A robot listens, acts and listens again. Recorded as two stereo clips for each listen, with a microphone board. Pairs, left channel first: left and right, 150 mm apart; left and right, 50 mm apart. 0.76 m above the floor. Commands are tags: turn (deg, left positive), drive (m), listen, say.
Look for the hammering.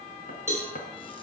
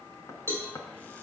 <turn deg="75"/>
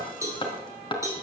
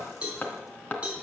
<turn deg="35"/>
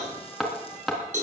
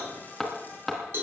<say>Found it: hammering, straight ahead, 2 to 4 m away.</say>